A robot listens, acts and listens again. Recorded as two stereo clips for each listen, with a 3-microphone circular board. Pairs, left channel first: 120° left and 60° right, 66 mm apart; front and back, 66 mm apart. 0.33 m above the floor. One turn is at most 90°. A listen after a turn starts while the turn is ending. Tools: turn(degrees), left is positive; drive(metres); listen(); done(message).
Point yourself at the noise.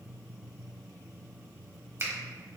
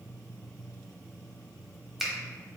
turn(degrees=-90)
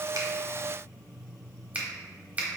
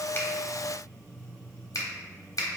done("Found it: a finger snap, straight ahead.")